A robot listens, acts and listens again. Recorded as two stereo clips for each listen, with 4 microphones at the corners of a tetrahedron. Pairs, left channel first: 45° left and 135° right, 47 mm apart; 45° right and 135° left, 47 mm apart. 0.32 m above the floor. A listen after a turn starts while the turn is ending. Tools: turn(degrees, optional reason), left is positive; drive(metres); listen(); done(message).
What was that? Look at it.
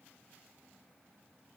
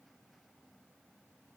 listen()
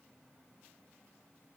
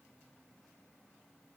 listen()
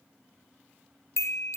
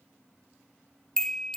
turn(degrees=35, reason="The chime: 35° left.")
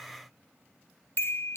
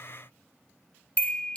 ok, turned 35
turn(degrees=20, reason="The chime is now 20° left.")
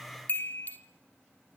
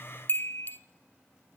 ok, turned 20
done("Facing the chime.")